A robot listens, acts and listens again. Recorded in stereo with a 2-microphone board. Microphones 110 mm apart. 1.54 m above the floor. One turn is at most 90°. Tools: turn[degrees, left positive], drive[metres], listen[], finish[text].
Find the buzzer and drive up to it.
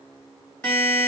Thought: The buzzer: about 15° left or 165° left.
Action: turn[15]
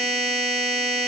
Action: drive[1.0]
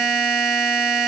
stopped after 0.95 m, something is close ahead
Action: finish[I am next to the buzzer.]